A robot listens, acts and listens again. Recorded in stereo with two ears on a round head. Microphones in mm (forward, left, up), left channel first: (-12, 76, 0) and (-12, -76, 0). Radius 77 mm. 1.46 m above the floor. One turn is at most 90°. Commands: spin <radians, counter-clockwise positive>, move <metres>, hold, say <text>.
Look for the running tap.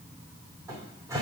hold
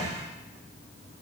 hold
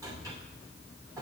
say I can't make out a running tap to turn to.